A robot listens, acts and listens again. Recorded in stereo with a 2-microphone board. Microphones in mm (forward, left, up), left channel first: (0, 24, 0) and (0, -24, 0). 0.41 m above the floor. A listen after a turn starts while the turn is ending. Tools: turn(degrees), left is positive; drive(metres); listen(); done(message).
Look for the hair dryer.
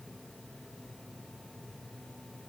listen()
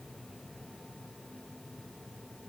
listen()
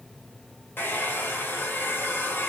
turn(degrees=45)
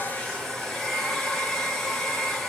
turn(degrees=10)
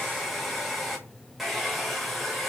done("Found it: a hair dryer, straight ahead.")